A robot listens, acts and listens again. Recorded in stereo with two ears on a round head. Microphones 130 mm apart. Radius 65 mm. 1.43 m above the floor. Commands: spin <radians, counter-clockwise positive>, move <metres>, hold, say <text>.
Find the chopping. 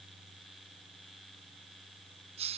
hold
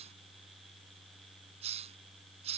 hold
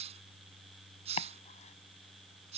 spin 0.79
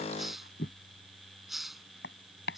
spin 1.57
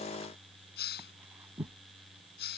spin -0.26
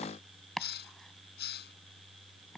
say Found it: chopping, straight ahead.